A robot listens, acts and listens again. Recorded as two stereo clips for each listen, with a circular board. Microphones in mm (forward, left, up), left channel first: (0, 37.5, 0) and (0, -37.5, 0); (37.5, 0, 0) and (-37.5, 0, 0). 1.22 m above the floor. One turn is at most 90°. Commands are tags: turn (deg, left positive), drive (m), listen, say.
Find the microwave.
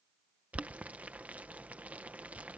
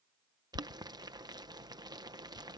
<listen/>
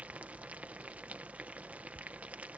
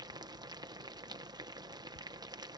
<listen/>
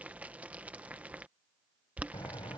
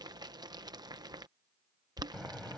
<turn deg="80"/>
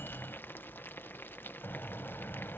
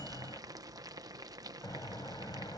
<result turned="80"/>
<turn deg="30"/>
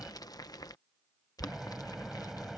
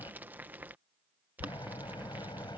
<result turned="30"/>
<say>Found it: a microwave, straight ahead.</say>